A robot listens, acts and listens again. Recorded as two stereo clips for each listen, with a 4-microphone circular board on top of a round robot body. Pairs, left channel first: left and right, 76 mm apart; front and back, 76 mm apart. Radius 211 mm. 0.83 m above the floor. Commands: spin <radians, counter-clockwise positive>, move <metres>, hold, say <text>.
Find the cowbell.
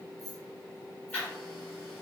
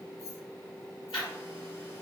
hold
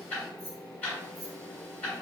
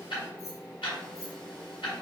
hold
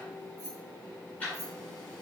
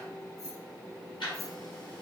say I can't make out a cowbell, only ticking and keys jangling.